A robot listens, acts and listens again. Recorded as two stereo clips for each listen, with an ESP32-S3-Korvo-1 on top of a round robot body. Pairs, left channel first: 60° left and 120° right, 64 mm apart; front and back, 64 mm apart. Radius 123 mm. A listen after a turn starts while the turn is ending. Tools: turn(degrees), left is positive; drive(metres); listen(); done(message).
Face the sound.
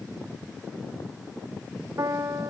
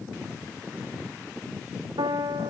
turn(degrees=-165)
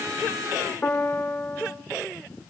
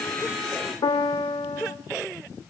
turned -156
turn(degrees=-10)
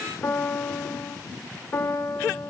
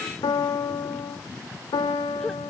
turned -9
done("Found it: a piano, straight ahead, 1 to 2 m away.")